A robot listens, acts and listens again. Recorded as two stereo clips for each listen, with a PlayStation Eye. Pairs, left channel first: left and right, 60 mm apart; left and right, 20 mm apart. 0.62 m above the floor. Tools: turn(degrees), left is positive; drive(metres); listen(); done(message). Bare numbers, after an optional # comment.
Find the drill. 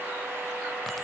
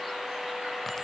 listen()
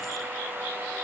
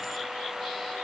listen()
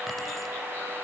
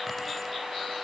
done("I can't make out a drill to turn to.")